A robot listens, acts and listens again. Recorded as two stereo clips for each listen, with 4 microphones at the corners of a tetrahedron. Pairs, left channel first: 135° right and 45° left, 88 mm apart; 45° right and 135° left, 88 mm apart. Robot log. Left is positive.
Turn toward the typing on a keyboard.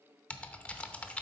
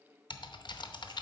note: The typing on a keyboard: 60° right.
cmd yaw -60
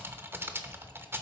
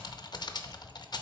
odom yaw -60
note: The typing on a keyboard is now 20° right.
cmd yaw -20
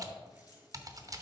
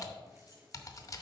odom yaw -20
end: Found it: typing on a keyboard, straight ahead, under 1 m away.